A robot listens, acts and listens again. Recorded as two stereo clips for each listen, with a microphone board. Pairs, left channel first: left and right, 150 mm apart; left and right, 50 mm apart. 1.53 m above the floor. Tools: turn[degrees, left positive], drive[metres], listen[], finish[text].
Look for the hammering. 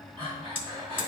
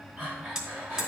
Thought: The hammering: about 15° right or 165° right.
Action: turn[-15]
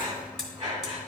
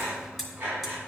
Action: finish[Found it: hammering, straight ahead.]